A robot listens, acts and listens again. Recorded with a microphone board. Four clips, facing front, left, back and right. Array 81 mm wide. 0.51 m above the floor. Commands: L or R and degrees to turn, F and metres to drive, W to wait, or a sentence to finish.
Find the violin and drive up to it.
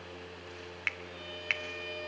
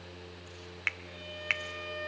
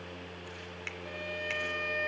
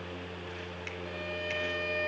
R145
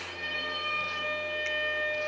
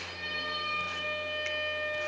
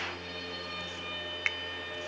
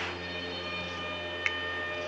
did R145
L15
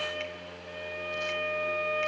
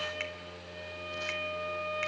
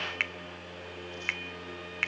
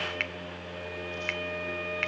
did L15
F1.0
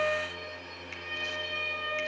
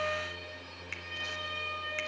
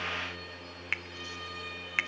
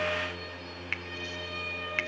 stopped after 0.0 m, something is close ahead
Blocked. The violin is further on, straight ahead.